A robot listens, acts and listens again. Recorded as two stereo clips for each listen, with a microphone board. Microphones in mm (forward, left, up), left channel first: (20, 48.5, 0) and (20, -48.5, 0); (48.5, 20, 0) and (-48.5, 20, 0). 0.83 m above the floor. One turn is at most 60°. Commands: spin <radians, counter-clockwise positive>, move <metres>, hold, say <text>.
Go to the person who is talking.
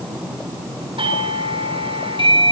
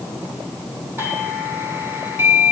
hold
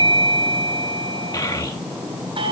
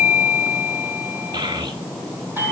spin 1.05
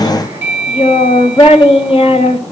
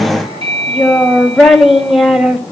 spin 1.05
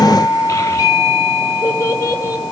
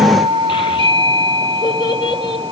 spin 0.61
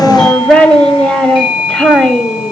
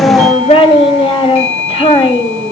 spin 0.17
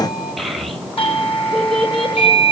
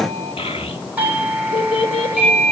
move 1.0
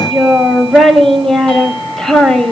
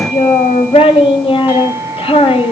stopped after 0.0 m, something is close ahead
say Blocked. The child speaking is further on, straight ahead.